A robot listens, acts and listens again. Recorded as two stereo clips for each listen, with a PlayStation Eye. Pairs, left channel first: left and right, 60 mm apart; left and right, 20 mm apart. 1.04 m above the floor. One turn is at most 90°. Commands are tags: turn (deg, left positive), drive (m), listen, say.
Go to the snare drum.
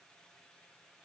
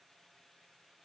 <listen/>
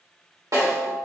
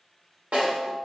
<turn deg="-90"/>
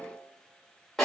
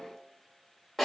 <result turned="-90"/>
<drive m="1.0"/>
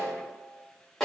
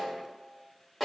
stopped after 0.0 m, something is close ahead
<say>Blocked. The snare drum is further on, straight ahead.</say>